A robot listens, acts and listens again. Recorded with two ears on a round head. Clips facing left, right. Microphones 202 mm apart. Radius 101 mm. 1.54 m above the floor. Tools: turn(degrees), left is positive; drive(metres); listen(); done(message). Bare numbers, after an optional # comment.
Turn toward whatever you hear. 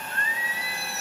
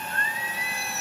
# The singing: about 40° right or 140° right.
turn(-40)
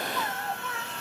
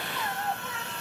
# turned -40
# So it is at 15° right.
turn(-15)
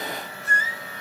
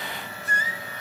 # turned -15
# The singing is now 15° right.
turn(-15)
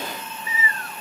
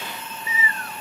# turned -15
# The singing is now 25° right.
turn(-25)
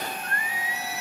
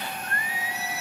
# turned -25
# The singing is now 30° right.
turn(-30)
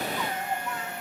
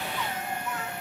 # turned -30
listen()
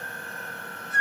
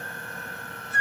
# The singing is now 10° right.
turn(-10)
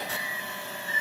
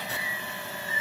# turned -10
done("Facing the singing.")